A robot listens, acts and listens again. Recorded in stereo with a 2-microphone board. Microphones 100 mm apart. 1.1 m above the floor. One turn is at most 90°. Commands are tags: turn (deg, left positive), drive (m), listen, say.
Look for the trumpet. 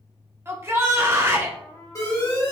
<turn deg="40"/>
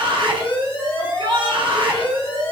<listen/>
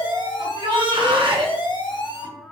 <say>Found it: a trumpet, straight ahead, under 1 m away.</say>